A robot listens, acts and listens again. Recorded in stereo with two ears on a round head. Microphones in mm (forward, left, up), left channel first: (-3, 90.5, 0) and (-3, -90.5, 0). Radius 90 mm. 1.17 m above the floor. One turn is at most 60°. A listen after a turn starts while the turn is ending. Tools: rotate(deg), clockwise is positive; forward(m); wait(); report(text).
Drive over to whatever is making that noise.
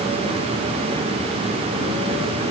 wait()
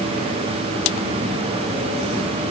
wait()
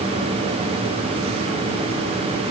report("I can't make out anything to turn to.")